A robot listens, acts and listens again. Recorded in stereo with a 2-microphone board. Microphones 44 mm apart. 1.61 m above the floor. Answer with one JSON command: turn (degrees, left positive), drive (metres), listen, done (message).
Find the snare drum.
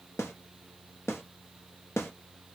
{"turn": 90}
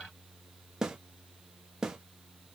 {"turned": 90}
{"turn": -10}
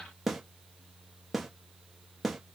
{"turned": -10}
{"done": "Found it: a snare drum, straight ahead."}